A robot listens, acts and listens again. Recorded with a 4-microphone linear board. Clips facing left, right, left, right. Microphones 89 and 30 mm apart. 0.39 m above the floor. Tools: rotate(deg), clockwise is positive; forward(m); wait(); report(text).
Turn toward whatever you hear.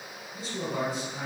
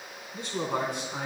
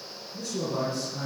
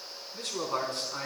rotate(70)
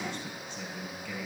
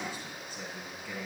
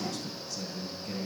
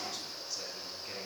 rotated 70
rotate(10)
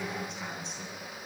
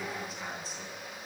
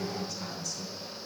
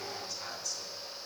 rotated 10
report("Facing the man speaking, 2 to 4 m away.")